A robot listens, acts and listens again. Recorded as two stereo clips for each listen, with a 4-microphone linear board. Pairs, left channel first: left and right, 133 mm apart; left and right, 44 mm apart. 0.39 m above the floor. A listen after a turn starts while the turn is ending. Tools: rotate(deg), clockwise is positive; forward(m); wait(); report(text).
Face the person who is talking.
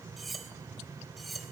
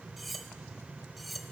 wait()
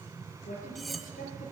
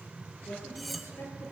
rotate(-90)
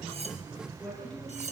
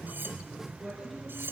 report("Found it: a woman speaking, straight ahead.")